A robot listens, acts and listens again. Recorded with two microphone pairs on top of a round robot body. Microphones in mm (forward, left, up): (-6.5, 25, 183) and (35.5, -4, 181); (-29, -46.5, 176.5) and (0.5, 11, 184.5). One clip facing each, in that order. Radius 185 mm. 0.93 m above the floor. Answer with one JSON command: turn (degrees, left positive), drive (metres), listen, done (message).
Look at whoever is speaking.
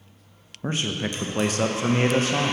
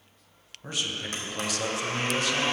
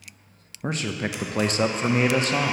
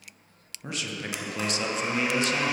{"turn": -160}
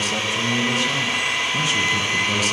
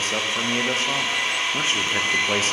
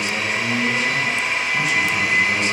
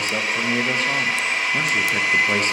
{"turn": 15}
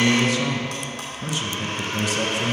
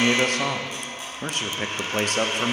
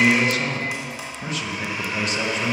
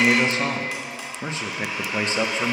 {"done": "Found it: a man speaking, straight ahead, under 1 m away."}